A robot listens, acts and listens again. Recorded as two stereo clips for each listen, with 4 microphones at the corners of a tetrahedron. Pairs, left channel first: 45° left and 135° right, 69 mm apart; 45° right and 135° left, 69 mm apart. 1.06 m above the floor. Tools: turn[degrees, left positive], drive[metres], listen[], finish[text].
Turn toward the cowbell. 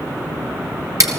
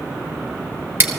Action: listen[]
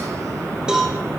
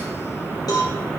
Thought: The cowbell: 55° right.
Action: turn[-55]
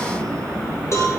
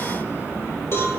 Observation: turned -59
Action: finish[Facing the cowbell, over 4 m away.]